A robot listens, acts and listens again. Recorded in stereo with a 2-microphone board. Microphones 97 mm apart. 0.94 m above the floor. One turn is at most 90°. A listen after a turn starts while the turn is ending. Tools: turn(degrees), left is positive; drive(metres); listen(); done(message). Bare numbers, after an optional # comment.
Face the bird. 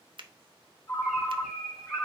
turn(-30)
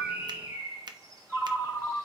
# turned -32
# So it is at 145° right.
turn(-90)
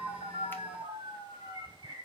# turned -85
# The bird is now 60° right.
turn(-60)
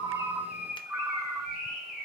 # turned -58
done("Found it: a bird, straight ahead, 2 to 4 m away.")